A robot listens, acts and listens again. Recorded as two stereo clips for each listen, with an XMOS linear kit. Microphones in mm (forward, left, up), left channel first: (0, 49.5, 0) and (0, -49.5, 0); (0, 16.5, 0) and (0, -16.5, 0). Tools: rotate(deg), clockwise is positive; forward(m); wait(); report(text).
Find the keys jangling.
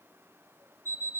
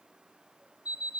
wait()
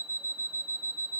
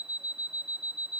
wait()
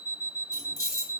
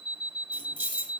rotate(-40)
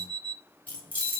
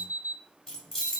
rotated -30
rotate(-15)
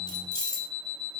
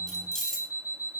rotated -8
rotate(-10)
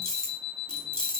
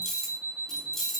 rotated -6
rotate(-10)
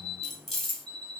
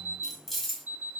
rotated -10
report("Found it: keys jangling, straight ahead, 2 to 4 m away.")